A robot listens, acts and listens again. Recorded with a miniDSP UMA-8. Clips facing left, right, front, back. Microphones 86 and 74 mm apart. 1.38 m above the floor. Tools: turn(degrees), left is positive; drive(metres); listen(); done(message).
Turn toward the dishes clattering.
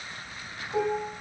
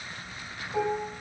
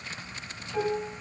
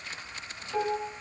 turn(degrees=145)
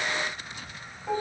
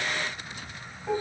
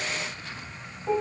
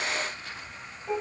done("Found it: dishes clattering, straight ahead, 2 to 4 m away.")